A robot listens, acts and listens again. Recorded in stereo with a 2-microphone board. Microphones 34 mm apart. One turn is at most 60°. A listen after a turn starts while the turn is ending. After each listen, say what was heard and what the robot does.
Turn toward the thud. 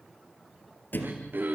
The thud: about 75° left or 105° left. Turn 60° left.
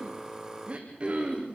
Keep listening.
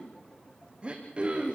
I heard a thud, but can't make it out now. It was about 15° left or 45° left.